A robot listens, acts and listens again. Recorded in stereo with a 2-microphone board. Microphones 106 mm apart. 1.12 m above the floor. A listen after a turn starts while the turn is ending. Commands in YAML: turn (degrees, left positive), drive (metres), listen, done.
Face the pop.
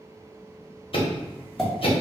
turn: 30
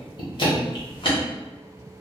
listen: true
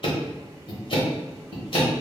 done: "I heard a pop, but can't make it out now. It was about 30° right or 150° left."